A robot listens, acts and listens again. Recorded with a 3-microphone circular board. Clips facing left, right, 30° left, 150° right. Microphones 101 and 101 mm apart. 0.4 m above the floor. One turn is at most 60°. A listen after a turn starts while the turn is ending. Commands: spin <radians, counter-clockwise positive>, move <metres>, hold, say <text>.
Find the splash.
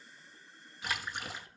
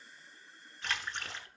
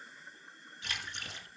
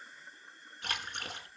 spin 1.05
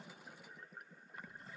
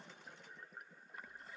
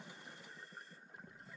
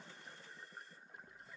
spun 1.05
spin 1.05
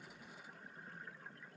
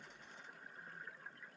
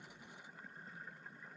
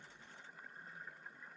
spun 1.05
spin 0.87
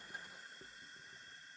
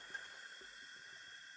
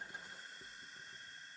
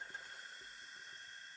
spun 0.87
say Facing where the splash came from. I can't hear it now.